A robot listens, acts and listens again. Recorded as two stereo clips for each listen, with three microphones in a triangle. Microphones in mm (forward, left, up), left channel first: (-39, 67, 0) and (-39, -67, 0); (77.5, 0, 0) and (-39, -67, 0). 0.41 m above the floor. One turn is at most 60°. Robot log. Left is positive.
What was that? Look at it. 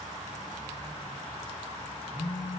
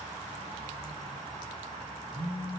note: The phone buzzing: 160° left.
cmd yaw +60
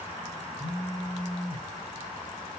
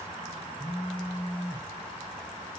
note: The phone buzzing is now 115° left.
cmd yaw +60
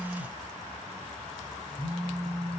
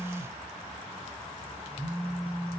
note: The phone buzzing is now 70° left.
cmd yaw +60
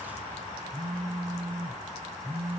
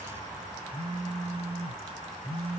end: Found it: a phone buzzing, straight ahead, 2 to 4 m away.